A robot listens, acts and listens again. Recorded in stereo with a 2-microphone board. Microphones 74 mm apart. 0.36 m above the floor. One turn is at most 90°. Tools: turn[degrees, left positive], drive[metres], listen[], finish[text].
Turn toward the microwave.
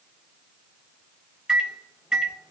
Action: turn[-30]
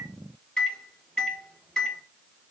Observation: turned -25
Thought: So it is at 10° left.
Action: turn[10]
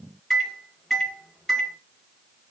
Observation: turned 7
Action: finish[Found it: a microwave, straight ahead, 1 to 2 m away.]